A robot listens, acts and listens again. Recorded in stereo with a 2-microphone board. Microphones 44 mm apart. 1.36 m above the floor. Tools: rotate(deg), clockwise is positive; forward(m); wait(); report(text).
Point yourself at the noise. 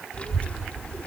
rotate(-30)
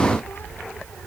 rotate(-115)
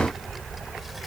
report("Facing the child speaking.")